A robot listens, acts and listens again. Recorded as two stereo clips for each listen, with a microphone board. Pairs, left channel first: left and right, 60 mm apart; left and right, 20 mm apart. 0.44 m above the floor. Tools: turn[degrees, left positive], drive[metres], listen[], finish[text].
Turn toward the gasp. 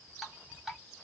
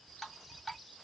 Action: listen[]
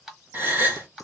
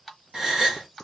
Thought: The gasp: about 35° right or 145° right.
Action: turn[-35]
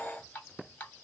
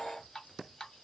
Action: listen[]
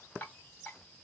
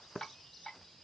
Action: finish[I heard a gasp, but can't make it out now. It was about straight ahead or 110° right.]